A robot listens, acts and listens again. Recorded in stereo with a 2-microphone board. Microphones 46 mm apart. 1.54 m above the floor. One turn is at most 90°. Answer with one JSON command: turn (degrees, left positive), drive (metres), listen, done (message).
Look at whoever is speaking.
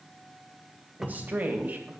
{"turn": -40}
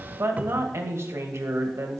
{"turn": -90}
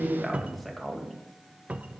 {"done": "Facing the woman speaking, 2 to 4 m away."}